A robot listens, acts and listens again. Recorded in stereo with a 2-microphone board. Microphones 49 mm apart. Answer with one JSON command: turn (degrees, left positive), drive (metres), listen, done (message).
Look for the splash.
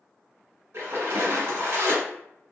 {"turn": -65}
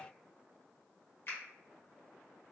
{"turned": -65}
{"listen": true}
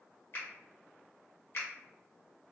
{"done": "I heard a splash, but can't make it out now. It was about straight ahead or 50° right."}